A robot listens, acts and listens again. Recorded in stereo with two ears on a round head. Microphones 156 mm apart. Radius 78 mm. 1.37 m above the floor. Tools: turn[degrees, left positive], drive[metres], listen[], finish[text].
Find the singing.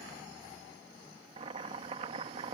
Action: listen[]
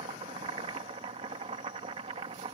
Action: listen[]
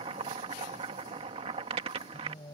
Thought: The singing: about 25° left or 155° left.
Action: turn[25]
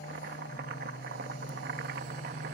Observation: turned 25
Thought: So it is at 130° left.
Action: turn[130]
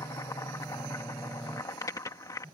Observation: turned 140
Thought: The singing is now 10° right.
Action: turn[-10]
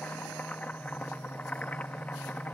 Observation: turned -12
Action: finish[Found it: singing, straight ahead.]